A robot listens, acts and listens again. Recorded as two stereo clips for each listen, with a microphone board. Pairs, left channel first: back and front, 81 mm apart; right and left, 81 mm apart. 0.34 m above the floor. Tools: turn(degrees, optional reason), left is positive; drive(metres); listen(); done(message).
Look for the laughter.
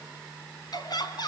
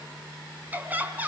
turn(degrees=155, reason="The laughter: 155° left.")
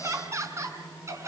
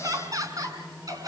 turn(degrees=50, reason="The laughter is now 50° left.")
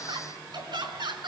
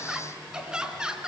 turn(degrees=10, reason="The laughter is now 10° left.")
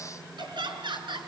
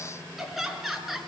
done("Found it: laughter, straight ahead.")